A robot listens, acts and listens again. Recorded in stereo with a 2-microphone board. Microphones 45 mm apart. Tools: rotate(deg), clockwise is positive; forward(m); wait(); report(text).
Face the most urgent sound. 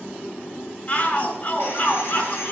rotate(-45)
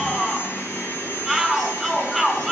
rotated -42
report("Facing the shout, 2 to 4 m away.")